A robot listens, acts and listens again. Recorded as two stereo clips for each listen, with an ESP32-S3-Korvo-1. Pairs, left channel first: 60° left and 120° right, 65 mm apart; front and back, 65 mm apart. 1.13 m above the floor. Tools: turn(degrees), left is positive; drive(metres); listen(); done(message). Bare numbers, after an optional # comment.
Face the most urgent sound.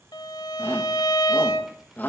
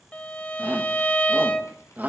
# The shout: 120° left.
turn(120)
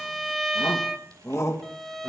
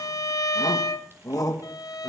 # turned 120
# The shout is now 20° left.
turn(20)
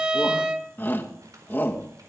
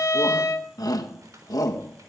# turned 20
done("Facing the shout, 1 to 2 m away.")